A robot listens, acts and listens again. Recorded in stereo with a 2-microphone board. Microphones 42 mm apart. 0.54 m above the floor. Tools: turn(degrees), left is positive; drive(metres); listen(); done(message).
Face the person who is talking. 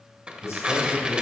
turn(degrees=75)
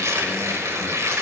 listen()
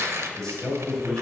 turn(degrees=15)
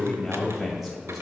done("Found it: a man speaking, straight ahead.")